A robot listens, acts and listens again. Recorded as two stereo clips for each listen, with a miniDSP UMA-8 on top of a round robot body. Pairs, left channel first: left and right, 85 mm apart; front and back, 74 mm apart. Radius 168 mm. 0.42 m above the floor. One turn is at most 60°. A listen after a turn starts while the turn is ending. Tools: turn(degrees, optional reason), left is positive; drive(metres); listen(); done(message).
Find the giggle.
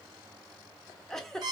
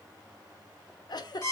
done("Facing the giggle.")